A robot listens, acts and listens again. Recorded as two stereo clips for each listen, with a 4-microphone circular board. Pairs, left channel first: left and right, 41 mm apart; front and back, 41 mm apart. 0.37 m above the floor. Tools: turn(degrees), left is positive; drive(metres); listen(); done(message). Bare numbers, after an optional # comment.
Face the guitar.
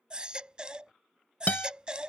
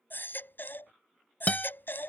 # The guitar: 50° left.
turn(50)
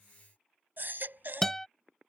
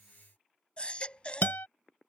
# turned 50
# The guitar is now 10° left.
turn(10)
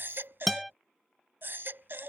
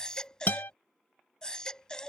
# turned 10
done("Facing the guitar.")